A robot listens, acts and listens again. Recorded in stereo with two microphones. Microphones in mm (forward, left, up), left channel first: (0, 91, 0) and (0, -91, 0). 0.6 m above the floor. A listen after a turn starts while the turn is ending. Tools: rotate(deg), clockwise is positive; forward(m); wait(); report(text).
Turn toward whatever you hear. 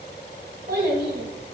rotate(55)
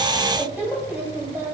rotate(15)
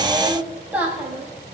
rotate(10)
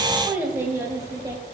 rotate(20)
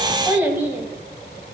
rotate(10)
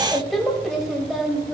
report("Facing the child speaking.")